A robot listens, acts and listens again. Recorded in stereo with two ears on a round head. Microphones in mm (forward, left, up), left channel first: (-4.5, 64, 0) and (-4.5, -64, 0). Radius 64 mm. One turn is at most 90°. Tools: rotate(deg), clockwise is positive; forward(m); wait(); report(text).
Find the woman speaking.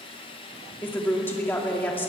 rotate(-15)
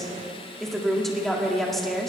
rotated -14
report("Facing the woman speaking, 2 to 4 m away.")